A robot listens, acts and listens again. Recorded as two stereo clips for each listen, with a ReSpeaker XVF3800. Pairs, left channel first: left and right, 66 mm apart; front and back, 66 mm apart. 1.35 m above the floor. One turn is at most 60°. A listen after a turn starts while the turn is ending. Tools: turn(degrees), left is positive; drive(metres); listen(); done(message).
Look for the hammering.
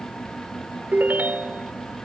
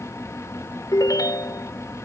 listen()
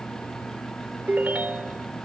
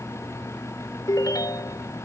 listen()
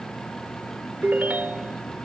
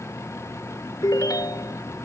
done("I can't make out hammering, only a ringtone.")